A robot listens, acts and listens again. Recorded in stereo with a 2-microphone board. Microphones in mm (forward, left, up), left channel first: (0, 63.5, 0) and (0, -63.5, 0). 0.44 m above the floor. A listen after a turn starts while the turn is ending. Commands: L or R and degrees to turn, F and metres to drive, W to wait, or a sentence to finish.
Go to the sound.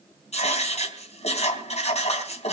L60
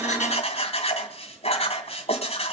L55
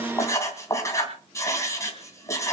L25
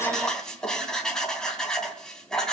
F1.0
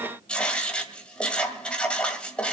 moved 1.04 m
L10
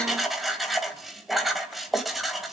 F1.0
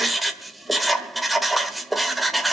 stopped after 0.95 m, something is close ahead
I am next to the writing.